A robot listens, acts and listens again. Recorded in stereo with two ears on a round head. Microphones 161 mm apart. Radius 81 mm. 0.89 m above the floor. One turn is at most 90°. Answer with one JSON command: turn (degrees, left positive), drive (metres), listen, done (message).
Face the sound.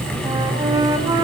{"turn": -20}
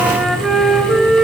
{"done": "Facing the flute, 2 to 4 m away."}